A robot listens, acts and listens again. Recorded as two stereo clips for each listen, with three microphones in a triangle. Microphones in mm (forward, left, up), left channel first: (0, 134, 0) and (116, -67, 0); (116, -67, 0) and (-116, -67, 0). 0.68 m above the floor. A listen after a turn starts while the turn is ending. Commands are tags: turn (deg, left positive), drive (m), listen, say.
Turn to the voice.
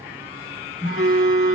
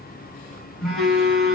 <listen/>
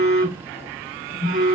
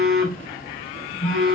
<listen/>
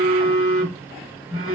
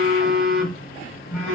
<say>I can't make out anyone speaking, only a phone buzzing.</say>